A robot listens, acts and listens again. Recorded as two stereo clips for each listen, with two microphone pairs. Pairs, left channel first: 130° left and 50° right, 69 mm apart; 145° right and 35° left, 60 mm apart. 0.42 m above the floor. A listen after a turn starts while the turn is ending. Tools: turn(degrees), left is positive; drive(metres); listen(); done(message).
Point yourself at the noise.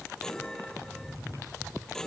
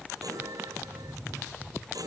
turn(degrees=50)
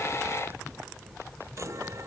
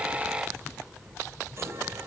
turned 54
listen()
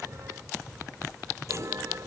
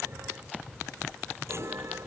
listen()
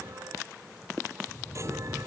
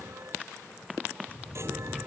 done("Facing where the chime came from. I can't hear it now.")